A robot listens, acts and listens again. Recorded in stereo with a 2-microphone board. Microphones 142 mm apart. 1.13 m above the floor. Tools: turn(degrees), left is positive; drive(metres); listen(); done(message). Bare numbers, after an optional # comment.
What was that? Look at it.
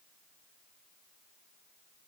listen()
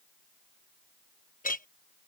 # The clink: about 70° left or 110° left.
turn(70)
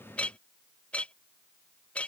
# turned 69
# So it is at 10° left.
turn(10)
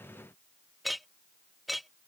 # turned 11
done("Facing the clink.")